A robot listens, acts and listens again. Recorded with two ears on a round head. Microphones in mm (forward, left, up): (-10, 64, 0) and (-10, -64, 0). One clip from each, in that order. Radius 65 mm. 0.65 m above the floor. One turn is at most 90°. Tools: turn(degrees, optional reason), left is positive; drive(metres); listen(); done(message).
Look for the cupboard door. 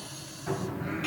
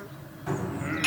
turn(degrees=-30)
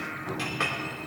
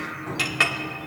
turn(degrees=-90, reason="So it is at 145° right.")
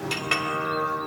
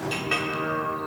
turn(degrees=-55, reason="Nothing new. It was at 55° right.")
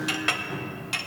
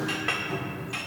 turn(degrees=-20, reason="The cupboard door is now 20° right.")
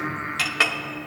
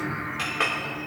listen()
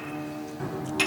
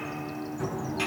done("Facing the cupboard door, 2 to 4 m away.")